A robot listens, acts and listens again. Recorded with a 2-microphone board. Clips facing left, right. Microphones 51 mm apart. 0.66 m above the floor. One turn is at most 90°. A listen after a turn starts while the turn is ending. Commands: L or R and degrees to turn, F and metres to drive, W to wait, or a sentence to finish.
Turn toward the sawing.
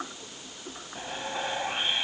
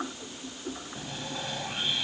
L30
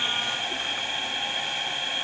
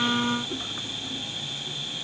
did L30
L90
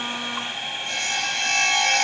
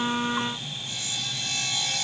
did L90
L70
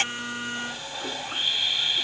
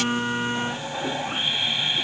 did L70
R20
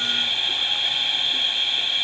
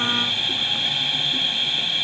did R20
Found it: sawing, straight ahead.